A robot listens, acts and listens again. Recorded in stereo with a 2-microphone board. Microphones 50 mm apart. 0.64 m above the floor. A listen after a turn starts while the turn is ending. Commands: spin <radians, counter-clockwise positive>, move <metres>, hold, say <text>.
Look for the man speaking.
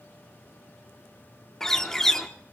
hold
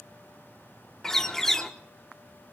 hold
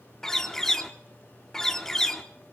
say I can't make out a man speaking to turn to.